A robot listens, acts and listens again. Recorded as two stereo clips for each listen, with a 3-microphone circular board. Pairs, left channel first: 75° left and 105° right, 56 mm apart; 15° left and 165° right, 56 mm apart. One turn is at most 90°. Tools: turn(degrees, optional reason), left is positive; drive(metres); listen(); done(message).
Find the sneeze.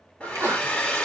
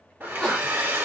turn(degrees=-70, reason="The sneeze: 70° right.")
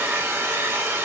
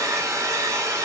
done("Facing where the sneeze came from. I can't hear it now.")